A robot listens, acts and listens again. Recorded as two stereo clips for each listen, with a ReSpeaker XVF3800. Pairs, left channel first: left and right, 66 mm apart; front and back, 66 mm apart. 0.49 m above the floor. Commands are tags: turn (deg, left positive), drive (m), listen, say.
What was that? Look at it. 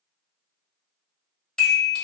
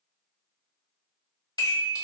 <turn deg="10"/>
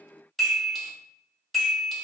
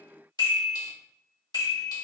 <say>Facing the chime, 1 to 2 m away.</say>